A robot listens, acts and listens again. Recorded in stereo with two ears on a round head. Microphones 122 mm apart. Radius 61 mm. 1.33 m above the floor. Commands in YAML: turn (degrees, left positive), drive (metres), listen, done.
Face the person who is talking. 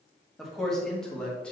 turn: 30
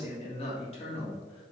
turn: 135
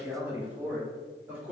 turn: -10
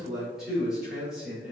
done: "Found it: a man speaking, straight ahead, over 4 m away."